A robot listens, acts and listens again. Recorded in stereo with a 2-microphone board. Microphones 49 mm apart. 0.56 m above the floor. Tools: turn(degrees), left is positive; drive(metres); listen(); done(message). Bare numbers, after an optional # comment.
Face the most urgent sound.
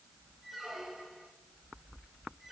listen()
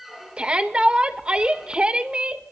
# The shout: about 25° right or 155° right.
turn(-25)
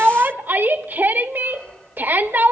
# So it is at 130° right.
turn(-130)
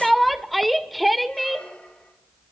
done("Facing the shout, 1 to 2 m away.")